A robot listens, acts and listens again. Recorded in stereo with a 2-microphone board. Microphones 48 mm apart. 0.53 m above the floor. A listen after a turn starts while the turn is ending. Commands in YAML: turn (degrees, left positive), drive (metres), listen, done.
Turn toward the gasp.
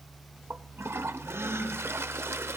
turn: -70
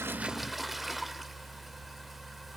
listen: true
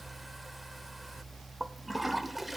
done: "I heard a gasp, but can't make it out now. It was about straight ahead or 40° right."